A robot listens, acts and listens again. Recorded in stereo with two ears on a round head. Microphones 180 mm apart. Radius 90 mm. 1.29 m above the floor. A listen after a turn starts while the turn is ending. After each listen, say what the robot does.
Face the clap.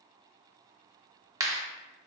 Turn 15° right.
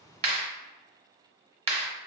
Turn 150° right.
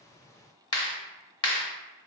Turn 20° left.
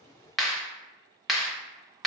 Found it: a clap, straight ahead, under 1 m away.